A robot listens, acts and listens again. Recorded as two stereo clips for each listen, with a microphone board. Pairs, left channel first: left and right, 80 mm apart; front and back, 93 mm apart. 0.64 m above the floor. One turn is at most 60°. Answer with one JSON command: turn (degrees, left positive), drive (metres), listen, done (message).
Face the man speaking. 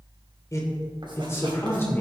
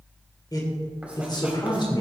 {"turn": 30}
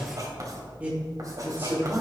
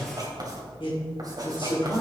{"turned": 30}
{"turn": -30}
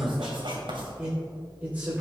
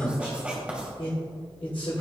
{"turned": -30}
{"turn": -20}
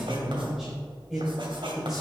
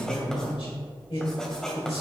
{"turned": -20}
{"done": "Found it: a man speaking, straight ahead, 2 to 4 m away."}